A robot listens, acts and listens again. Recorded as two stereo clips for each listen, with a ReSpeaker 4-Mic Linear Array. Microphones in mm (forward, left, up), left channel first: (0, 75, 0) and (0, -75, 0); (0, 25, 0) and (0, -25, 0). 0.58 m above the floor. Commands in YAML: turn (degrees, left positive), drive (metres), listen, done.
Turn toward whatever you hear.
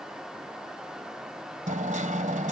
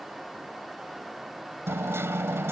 turn: -55
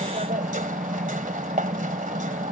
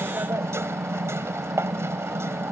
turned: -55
turn: -65
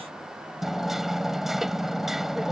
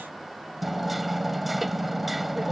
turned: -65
done: "Facing the hammering."